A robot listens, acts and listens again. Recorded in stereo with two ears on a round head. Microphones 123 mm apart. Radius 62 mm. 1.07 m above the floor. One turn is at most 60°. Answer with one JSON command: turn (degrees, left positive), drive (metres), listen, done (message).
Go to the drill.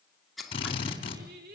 {"turn": 40}
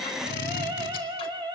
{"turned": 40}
{"turn": 60}
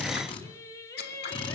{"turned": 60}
{"turn": 40}
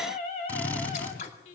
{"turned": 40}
{"turn": 10}
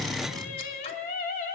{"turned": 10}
{"drive": 1.0}
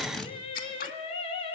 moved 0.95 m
{"drive": 1.0}
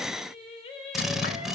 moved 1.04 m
{"drive": 1.0}
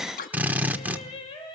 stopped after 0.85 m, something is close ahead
{"turn": -15}
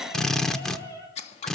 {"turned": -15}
{"done": "I am next to the drill."}